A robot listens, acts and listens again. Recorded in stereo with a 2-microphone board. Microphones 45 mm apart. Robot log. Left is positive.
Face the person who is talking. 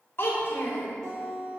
note: The child speaking: about 55° left or 125° left.
cmd yaw +55
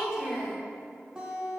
end: Found it: a child speaking, straight ahead, 1 to 2 m away.